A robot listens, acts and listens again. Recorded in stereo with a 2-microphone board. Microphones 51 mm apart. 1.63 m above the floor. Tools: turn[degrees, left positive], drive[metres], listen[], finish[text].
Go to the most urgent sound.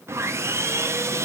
Action: listen[]
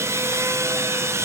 Action: listen[]
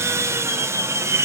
Action: finish[I can't make out anything urgent, only sawing.]